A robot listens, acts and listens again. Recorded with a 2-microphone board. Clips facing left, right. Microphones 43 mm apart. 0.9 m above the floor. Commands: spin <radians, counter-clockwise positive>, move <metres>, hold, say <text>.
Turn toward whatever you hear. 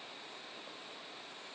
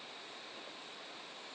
hold
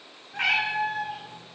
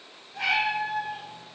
spin 0.96
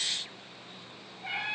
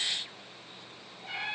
spin 1.05
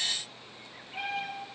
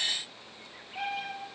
spin 0.44
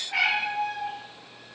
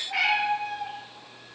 say Found it: a cat meowing, straight ahead.